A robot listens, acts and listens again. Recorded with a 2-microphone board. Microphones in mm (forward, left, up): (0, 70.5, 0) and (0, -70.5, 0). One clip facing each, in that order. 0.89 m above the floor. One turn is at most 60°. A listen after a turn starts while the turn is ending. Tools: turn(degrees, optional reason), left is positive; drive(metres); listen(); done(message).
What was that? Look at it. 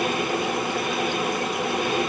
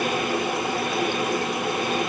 listen()
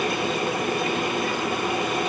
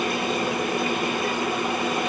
listen()
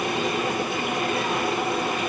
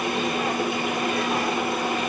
done("I can't make out anything.")